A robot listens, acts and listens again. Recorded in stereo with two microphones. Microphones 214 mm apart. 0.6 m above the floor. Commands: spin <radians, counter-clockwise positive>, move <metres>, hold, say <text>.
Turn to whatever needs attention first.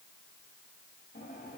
hold
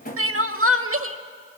spin -1.22
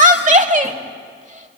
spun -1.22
spin -0.61
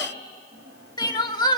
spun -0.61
spin 0.35
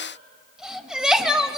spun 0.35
say Facing the crying.